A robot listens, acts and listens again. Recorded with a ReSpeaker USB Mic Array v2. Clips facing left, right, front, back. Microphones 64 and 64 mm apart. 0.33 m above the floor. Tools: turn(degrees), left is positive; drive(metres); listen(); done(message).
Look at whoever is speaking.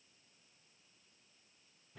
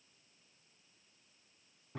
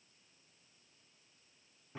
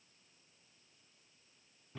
listen()
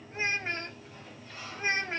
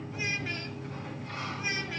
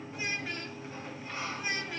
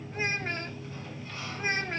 turn(degrees=140)
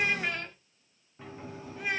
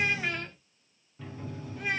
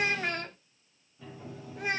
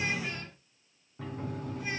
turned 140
done("Found it: a child speaking, straight ahead, 1 to 2 m away.")